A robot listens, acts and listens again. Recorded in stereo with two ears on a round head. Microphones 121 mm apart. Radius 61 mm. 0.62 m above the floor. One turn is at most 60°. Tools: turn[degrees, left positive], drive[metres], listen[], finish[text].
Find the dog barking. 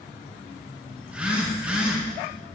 Action: listen[]
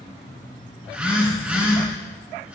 Action: listen[]
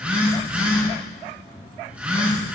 Action: finish[I can't make out a dog barking to turn to.]